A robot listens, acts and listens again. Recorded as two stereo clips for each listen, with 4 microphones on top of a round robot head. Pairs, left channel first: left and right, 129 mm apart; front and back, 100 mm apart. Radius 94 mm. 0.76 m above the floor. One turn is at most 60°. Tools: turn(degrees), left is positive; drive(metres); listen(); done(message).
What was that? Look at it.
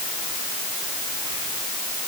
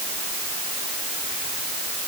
listen()
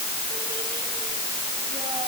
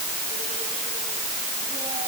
listen()
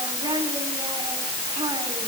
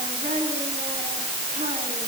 turn(degrees=-60)
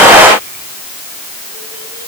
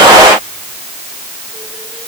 turn(degrees=-60)
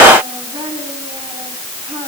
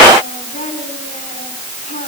turn(degrees=-30)
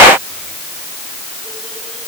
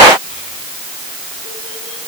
listen()
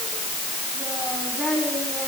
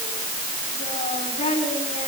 done("Facing the child speaking.")